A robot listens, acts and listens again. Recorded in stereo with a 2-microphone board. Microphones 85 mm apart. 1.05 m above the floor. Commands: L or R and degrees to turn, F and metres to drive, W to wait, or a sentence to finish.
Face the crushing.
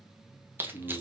R25
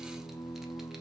W
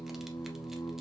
W
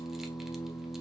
I heard crushing, but can't make it out now. It was about straight ahead or 130° right.